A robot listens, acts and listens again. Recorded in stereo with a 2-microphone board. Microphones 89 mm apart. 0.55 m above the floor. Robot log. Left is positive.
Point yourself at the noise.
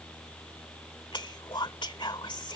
note: The whispering: about 60° left or 120° left.
cmd yaw +60
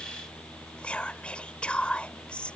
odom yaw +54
note: So it is at 15° left.
cmd yaw +15
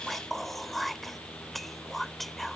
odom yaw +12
end: Facing the whispering.